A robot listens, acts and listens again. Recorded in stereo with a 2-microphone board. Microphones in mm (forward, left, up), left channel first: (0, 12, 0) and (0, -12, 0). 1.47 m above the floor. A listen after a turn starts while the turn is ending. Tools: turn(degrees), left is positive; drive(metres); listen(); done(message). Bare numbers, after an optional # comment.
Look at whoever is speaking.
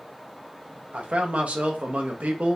# The man speaking: about 65° right or 115° right.
turn(-65)
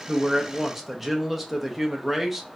done("Found it: a man speaking, straight ahead.")